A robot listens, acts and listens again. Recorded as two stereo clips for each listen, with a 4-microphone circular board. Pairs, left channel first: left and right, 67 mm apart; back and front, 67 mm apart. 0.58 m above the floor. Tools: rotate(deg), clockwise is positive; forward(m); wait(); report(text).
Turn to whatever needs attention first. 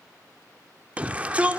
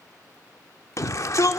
rotate(155)
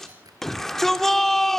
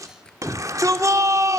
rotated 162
report("Facing the shout, 1 to 2 m away.")